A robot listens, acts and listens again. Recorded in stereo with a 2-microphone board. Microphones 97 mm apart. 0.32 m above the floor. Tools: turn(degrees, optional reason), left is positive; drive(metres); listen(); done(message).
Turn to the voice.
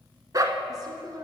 turn(degrees=-40, reason="The woman speaking: about 40° right or 140° right.")
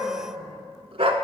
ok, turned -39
listen()
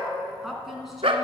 done("Found it: a woman speaking, straight ahead, 2 to 4 m away.")